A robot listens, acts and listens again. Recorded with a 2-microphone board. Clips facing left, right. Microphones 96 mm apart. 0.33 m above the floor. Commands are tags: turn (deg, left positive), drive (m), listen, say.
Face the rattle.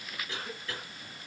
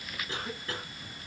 <listen/>
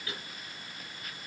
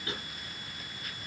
<listen/>
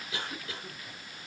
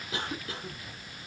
<say>I can't make out a rattle to turn to.</say>